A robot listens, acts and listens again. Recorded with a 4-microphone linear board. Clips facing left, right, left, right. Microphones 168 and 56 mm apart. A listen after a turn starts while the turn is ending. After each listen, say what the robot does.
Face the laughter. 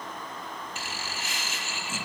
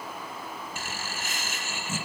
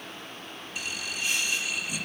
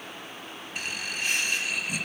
Turn 50° right.
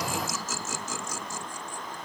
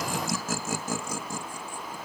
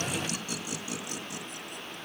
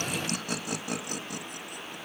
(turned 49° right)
Turn 75° right.
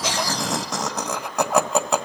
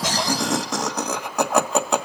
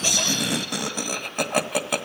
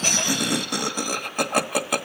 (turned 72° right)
Facing the laughter, 1 to 2 m away.